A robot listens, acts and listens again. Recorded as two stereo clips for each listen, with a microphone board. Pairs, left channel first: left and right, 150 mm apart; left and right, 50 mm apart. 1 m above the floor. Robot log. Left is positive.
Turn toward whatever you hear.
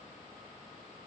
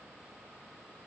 cmd idle
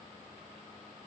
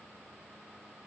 cmd idle
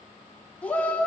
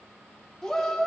cmd yaw +30
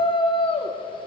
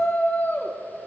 note: So it is at 140° left.
cmd yaw +140
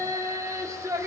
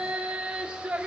note: The shout is now 20° right.
cmd yaw -20
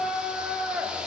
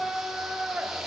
end: Found it: a shout, straight ahead.